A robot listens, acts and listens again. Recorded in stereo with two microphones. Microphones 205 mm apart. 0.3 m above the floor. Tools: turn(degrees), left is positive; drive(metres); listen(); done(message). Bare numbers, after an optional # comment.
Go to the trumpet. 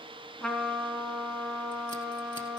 turn(30)
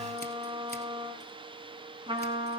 # So it is at 25° right.
turn(-25)
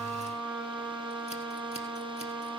drive(1.0)
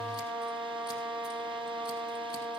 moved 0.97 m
drive(1.0)
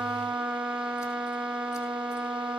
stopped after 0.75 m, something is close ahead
done("Arrived at the trumpet, straight ahead.")